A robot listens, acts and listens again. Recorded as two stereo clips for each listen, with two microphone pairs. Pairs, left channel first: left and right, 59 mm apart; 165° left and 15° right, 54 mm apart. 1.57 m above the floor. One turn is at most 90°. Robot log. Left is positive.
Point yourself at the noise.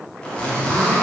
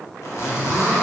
note: The zipper: 160° left.
cmd yaw +90
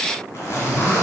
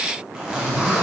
note: The zipper is now 60° left.
cmd yaw +60
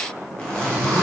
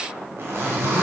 note: The zipper is now 15° left.
cmd yaw +15
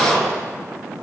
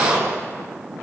end: Found it: a zipper, straight ahead, under 1 m away.